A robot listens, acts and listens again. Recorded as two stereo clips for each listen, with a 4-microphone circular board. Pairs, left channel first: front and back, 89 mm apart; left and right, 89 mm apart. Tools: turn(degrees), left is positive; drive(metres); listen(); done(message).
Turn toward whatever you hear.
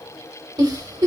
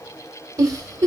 turn(degrees=-135)
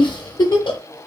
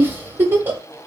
turn(degrees=-25)
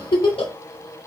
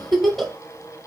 done("Found it: a giggle, straight ahead, under 1 m away.")